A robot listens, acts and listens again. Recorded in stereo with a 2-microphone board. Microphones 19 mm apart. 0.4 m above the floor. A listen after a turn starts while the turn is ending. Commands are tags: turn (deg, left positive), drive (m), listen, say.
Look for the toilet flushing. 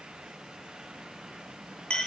<listen/>
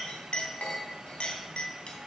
<listen/>
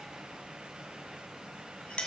<say>I can't make out a toilet flushing, only a clink.</say>